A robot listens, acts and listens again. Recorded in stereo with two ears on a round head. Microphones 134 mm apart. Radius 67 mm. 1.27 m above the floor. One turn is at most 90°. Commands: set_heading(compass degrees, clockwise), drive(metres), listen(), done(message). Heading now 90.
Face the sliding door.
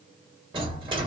set_heading(120)
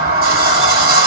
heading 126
set_heading(216)
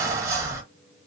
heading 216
set_heading(236)
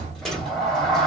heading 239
done("Found it: a sliding door, straight ahead, 1 to 2 m away.")